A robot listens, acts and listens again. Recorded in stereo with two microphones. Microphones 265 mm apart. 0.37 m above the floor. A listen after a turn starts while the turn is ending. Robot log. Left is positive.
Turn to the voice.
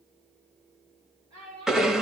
cmd yaw -90
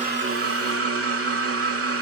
cmd idle
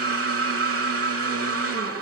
cmd idle
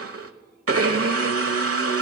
end: Facing where the child speaking came from. I can't hear it now.